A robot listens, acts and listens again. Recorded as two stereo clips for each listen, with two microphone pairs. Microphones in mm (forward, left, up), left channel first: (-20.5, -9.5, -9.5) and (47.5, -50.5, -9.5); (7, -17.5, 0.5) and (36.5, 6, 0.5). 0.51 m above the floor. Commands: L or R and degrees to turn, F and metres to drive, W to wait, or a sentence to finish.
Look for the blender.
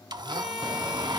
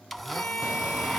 R50
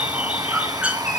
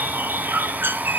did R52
W
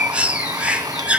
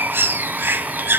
W
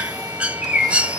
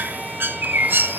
I heard a blender from this way, but can't make it out now.